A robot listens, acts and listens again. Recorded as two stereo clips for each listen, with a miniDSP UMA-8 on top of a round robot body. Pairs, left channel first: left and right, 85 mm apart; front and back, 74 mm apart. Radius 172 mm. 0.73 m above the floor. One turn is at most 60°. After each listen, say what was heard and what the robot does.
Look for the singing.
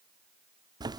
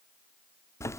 Keep listening.
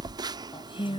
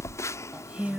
The singing: 105° left. Turn 60° left.
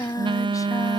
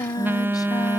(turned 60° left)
The singing is now 40° left. Turn 40° left.
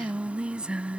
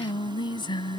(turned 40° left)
The singing is now 10° right. Turn 10° right.
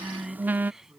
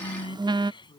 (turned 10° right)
Facing the singing.